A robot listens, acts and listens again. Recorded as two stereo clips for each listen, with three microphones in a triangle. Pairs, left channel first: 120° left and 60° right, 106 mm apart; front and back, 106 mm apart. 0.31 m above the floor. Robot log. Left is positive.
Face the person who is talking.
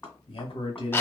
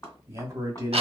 note: The man speaking: 125° left.
cmd yaw +125
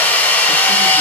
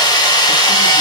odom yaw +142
note: Nothing new. It was at 15° right.
cmd yaw -15
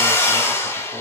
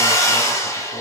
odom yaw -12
cmd idle
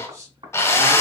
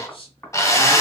end: Found it: a man speaking, straight ahead, 1 to 2 m away.